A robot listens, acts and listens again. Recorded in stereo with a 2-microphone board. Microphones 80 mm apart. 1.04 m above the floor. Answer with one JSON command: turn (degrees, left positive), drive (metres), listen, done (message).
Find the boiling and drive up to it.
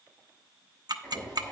{"turn": 40}
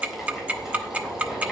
{"drive": 1.0}
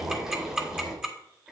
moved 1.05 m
{"drive": 1.0}
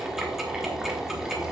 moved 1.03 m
{"drive": 1.0}
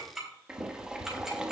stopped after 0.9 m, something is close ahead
{"turn": -10}
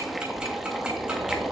{"done": "Arrived at the boiling, straight ahead."}